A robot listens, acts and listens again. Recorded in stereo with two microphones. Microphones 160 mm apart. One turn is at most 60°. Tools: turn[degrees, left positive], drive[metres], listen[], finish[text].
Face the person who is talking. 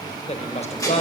Thought: The woman speaking: about 40° left or 140° left.
Action: turn[40]
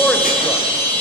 Action: listen[]
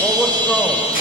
Action: listen[]
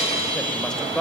Action: finish[Facing the woman speaking, 1 to 2 m away.]